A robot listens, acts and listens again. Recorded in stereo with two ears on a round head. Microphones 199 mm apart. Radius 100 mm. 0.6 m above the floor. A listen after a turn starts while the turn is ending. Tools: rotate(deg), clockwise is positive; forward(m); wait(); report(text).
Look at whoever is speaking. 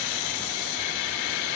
wait()
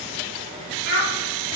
rotate(60)
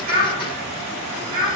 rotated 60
rotate(60)
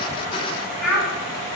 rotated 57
report("Found it: a child speaking, straight ahead.")